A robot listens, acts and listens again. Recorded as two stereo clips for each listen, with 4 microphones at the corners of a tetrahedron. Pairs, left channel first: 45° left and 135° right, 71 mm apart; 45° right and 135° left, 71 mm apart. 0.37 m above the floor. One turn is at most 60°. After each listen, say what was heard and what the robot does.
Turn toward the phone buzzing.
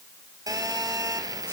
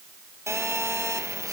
The phone buzzing: 170° right. Turn 60° right.
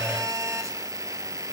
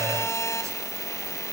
The phone buzzing is now 90° right. Turn 60° right.
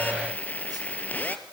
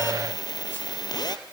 The phone buzzing is now 20° right. Turn 20° right.
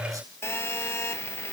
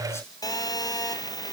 The phone buzzing is now 10° right. Turn 10° right.
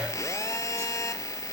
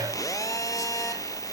Facing the phone buzzing.